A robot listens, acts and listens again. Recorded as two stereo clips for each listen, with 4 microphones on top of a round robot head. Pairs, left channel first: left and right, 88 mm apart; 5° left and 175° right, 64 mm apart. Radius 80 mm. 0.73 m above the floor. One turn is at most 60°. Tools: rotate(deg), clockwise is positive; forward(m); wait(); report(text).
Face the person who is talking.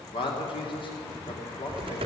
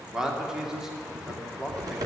rotate(-60)
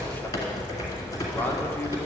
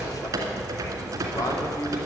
rotate(-40)
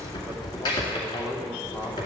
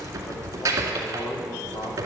rotate(-15)
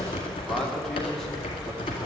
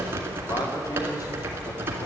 report("Found it: a man speaking, straight ahead, 2 to 4 m away.")